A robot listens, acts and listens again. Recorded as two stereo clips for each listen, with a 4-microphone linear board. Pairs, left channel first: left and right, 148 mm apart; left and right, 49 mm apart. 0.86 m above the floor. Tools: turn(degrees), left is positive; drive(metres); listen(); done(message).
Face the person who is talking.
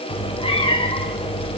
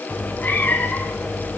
listen()
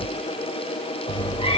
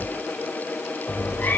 listen()
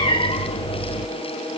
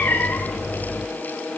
done("I can't make out anyone speaking to turn to.")